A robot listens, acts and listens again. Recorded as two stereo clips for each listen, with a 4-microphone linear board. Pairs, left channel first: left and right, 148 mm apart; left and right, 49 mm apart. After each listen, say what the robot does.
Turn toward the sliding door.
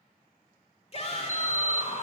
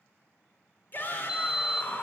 Turn 15° right.
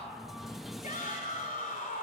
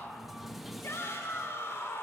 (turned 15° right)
Found it: a sliding door, straight ahead, under 1 m away.